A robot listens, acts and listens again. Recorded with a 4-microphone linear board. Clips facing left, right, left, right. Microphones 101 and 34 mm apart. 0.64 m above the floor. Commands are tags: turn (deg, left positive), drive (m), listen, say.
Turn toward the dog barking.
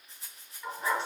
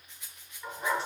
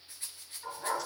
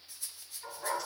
<turn deg="-30"/>
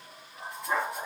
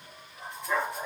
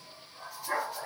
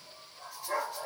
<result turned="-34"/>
<turn deg="30"/>
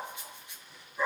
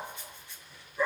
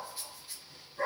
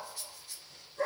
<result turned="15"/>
<turn deg="15"/>
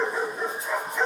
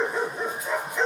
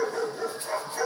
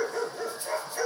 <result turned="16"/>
<say>Facing the dog barking.</say>